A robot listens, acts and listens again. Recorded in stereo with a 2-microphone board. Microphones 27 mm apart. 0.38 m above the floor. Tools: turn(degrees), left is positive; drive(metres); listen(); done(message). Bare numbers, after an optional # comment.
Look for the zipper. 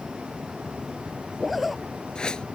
turn(30)
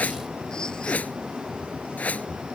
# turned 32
listen()
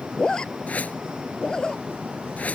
# So it is at 150° left.
turn(150)
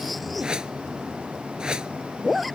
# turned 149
done("Found it: a zipper, straight ahead.")